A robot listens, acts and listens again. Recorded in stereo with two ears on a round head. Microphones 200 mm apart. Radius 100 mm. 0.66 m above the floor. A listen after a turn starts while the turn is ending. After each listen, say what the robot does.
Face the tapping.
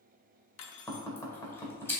Turn 30° left.
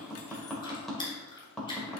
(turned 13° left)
Found it: tapping, straight ahead.